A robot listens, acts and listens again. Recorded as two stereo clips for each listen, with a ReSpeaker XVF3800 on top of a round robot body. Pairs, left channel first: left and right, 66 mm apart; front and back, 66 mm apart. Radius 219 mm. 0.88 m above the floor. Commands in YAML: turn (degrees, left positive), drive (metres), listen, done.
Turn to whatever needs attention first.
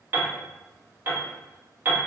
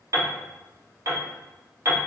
listen: true
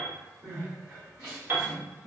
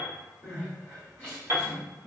turn: -60
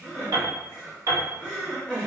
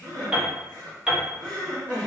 turn: -25
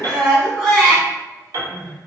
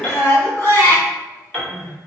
done: "Facing the crying, 1 to 2 m away."